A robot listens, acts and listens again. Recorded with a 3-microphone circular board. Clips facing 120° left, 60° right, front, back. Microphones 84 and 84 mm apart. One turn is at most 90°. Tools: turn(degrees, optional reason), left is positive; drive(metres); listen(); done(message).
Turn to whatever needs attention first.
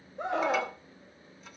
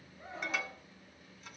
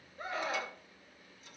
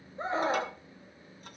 turn(degrees=90, reason="The scream: 120° left.")
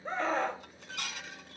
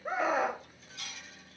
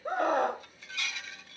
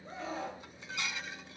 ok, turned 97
turn(degrees=20, reason="The scream is now 20° left.")
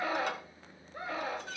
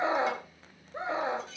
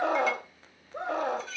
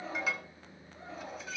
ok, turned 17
done("Found it: a scream, straight ahead.")